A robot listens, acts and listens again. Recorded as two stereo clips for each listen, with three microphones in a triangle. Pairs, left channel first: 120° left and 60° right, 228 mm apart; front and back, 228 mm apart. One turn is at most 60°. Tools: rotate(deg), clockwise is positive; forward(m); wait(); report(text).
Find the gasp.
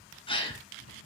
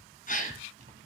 rotate(-55)
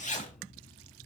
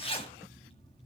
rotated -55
report("Facing where the gasp came from. I can't hear it now.")